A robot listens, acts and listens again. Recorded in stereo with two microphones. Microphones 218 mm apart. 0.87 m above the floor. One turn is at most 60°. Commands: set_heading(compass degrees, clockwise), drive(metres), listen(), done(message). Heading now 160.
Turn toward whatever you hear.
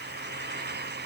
listen()
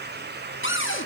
set_heading(100)
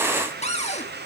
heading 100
set_heading(65)
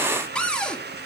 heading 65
done("Facing the cupboard door, 1 to 2 m away.")